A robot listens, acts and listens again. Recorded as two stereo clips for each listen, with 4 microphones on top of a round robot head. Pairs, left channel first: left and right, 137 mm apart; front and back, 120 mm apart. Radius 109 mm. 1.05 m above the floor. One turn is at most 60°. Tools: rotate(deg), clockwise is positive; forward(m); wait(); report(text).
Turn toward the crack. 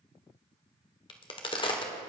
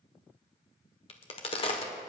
rotate(-40)
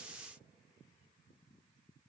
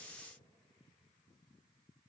report("I heard a crack from this way, but can't make it out now.")